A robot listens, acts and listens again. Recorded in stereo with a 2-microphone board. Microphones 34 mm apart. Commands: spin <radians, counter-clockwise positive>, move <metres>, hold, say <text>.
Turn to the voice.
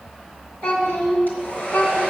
spin 1.22
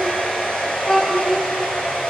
spin 0.44
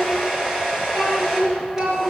spin -0.17
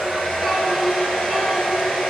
say Facing the child speaking, 2 to 4 m away.